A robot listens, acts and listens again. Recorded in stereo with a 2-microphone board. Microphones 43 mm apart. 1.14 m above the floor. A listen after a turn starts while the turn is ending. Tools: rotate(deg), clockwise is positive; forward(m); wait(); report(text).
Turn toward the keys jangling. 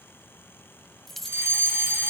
rotate(-30)
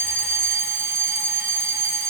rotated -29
wait()
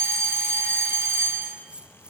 rotate(25)
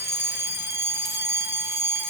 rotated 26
wait()
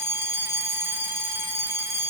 wait()
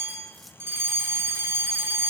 report("I heard keys jangling from this way, but can't make it out now.")